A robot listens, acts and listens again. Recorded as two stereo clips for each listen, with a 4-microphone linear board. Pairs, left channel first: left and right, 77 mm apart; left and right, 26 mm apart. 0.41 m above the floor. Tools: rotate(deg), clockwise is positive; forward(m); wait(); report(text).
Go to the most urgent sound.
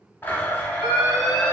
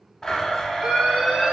rotate(50)
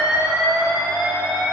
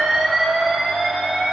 rotate(80)
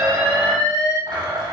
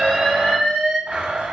forward(1.0)
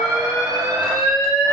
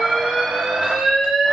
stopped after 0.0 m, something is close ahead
report("Something is in my way. I am facing the alarm but have not reached it.")